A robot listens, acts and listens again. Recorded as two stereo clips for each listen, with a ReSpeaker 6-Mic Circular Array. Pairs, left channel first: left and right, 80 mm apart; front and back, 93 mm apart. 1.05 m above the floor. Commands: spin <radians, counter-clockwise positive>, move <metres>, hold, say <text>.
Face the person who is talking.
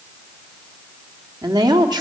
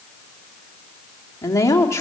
spin -1.05
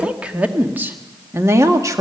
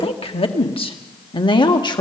spin -0.70
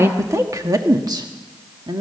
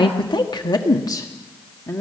spin -1.13
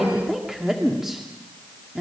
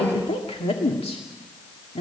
say Facing the woman speaking, 1 to 2 m away.